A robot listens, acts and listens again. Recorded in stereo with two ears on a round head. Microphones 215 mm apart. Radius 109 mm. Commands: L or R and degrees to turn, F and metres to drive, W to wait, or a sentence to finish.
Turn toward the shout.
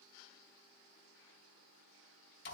W
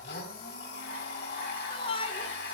L25
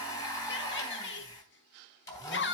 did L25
L130
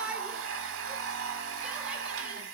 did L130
Facing the shout, 1 to 2 m away.